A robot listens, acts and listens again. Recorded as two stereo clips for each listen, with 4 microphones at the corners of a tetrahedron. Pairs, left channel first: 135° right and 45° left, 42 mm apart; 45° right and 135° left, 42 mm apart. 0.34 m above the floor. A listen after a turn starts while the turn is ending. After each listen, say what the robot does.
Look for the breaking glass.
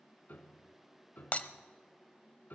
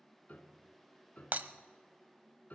Turn 170° left.
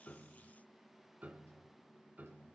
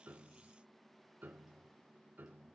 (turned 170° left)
Facing where the breaking glass came from. I can't hear it now.